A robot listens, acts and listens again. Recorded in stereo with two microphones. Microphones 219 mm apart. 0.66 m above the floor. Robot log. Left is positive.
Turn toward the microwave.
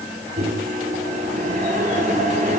note: The microwave: about 35° right or 145° right.
cmd yaw -35
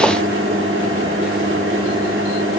note: So it is at 110° right.
cmd yaw -110
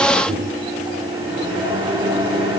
note: The microwave is now 25° right.
cmd yaw -25
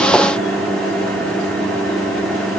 end: Found it: a microwave, straight ahead, over 4 m away.